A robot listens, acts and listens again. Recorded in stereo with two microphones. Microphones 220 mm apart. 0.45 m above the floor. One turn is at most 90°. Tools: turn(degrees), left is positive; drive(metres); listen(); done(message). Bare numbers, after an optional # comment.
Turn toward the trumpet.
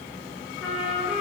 turn(30)
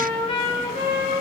# So it is at 150° left.
turn(90)
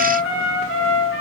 # The trumpet is now 80° left.
turn(80)
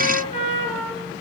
# The trumpet is now 30° left.
turn(30)
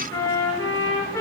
# The trumpet is now 10° left.
turn(10)
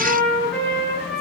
done("Found it: a trumpet, straight ahead.")